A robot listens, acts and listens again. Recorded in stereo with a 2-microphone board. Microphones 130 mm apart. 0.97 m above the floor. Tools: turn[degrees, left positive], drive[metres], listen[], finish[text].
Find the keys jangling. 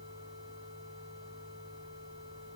Action: listen[]
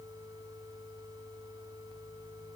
Action: listen[]
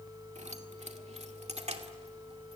Thought: The keys jangling: about 60° right or 120° right.
Action: turn[-60]
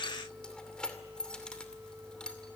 Action: finish[Facing the keys jangling, 2 to 4 m away.]